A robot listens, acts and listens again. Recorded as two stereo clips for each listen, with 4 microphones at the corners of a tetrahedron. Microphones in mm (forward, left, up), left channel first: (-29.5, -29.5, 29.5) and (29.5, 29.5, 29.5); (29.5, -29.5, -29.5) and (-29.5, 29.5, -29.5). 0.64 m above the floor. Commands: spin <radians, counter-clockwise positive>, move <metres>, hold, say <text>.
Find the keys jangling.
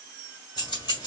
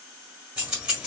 spin -2.53
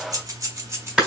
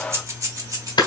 spin 1.75
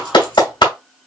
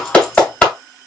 hold
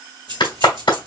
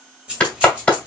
spin 1.05
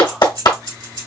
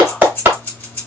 spin 0.35
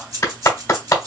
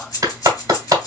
say Facing the keys jangling, 2 to 4 m away.